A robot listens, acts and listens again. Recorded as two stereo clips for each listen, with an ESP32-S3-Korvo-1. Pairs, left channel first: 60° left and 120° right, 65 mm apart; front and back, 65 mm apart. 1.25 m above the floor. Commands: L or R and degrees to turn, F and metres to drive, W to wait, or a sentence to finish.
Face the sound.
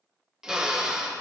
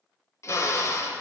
R40
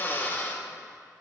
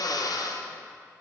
Facing the drill, under 1 m away.